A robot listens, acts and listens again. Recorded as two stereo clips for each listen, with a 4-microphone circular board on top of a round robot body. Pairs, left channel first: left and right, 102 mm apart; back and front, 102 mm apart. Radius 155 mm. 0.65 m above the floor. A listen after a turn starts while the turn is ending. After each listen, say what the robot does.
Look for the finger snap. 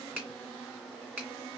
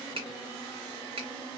Turn 15° right.
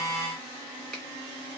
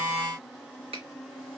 Facing the finger snap.